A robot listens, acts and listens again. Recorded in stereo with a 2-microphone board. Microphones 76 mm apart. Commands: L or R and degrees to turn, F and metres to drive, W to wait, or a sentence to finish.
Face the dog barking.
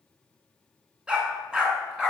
R30
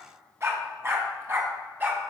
R155
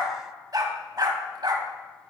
R65
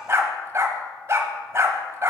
R35
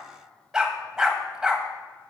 R10
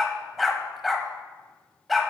Found it: a dog barking, straight ahead, 1 to 2 m away.